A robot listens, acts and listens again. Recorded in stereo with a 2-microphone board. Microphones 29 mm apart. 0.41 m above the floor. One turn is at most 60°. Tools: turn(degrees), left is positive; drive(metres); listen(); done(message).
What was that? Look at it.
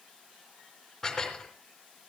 turn(degrees=15)
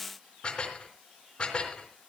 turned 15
turn(degrees=60)
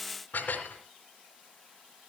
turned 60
turn(degrees=60)
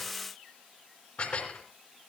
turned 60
turn(degrees=40)
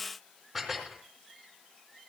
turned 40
done("Found it: dishes clattering, straight ahead.")